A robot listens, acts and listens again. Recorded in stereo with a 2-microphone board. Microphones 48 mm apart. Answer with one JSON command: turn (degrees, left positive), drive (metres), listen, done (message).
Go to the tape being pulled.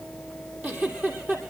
{"listen": true}
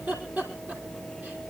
{"listen": true}
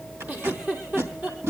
{"turn": -70}
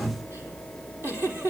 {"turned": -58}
{"listen": true}
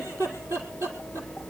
{"listen": true}
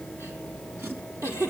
{"done": "I heard tape being pulled, but can't make it out now. It was about 10° right or 50° right. I did not reach it."}